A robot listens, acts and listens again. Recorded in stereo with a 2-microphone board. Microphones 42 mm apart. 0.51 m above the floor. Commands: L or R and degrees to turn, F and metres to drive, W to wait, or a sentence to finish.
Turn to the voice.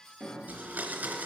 W
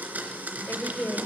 L65
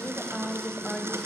L10
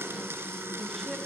L10
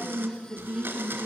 Facing the woman speaking.